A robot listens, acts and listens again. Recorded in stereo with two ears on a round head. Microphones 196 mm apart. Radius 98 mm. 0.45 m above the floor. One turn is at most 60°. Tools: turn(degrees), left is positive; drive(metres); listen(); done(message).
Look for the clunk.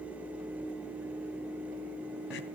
listen()
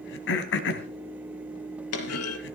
turn(degrees=60)
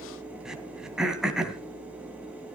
turn(degrees=30)
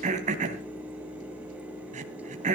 done("Facing where the clunk came from. I can't hear it now.")